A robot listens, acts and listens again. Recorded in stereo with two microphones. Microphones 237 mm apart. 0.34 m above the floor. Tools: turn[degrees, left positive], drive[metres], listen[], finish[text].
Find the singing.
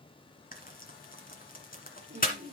Thought: The singing: about 50° right or 130° right.
Action: turn[-50]
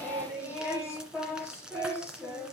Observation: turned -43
Thought: So it is at 10° right.
Action: turn[-10]
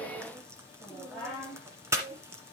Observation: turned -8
Action: finish[Facing the singing, over 4 m away.]